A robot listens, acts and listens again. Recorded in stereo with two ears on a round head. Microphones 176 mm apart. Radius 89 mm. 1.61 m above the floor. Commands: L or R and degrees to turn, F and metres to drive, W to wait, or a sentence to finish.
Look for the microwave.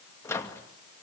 L15
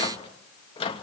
L145
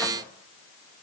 W
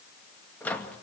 L10
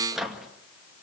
Found it: a microwave, straight ahead.